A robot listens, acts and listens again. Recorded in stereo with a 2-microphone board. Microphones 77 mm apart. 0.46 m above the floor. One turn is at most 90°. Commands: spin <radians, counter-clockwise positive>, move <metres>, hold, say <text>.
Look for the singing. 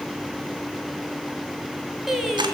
spin -0.52
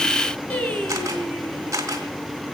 spin 0.26
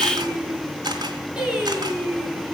spin -0.26
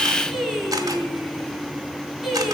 say Found it: singing, straight ahead, over 4 m away.